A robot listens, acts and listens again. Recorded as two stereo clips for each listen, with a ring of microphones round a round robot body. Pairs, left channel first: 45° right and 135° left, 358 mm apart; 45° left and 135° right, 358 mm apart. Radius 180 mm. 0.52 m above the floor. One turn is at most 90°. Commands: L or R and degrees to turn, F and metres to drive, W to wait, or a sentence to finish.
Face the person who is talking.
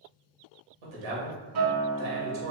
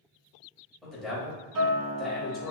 L90
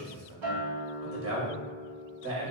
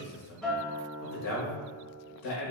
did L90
L80
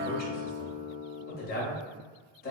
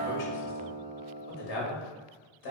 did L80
L20
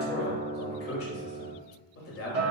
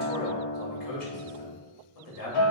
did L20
L10
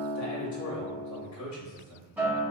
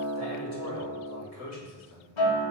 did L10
Facing the man speaking.